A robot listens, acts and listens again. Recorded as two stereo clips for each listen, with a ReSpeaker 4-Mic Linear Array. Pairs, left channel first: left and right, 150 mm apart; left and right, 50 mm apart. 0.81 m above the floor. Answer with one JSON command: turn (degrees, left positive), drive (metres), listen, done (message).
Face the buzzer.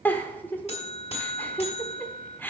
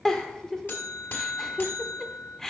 {"turn": 45}
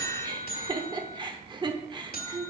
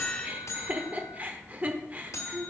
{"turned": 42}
{"turn": 90}
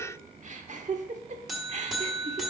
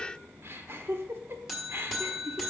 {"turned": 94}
{"done": "Facing the buzzer."}